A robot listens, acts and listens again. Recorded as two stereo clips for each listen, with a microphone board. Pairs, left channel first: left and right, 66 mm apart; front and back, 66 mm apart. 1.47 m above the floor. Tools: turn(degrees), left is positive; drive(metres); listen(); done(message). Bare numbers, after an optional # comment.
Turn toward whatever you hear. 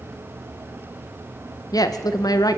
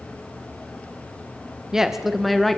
# The woman speaking: 85° left.
turn(85)
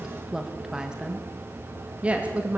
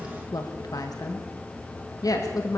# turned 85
# The woman speaking is now 25° right.
turn(-25)
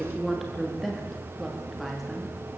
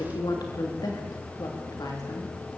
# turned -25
done("Found it: a woman speaking, straight ahead, 2 to 4 m away.")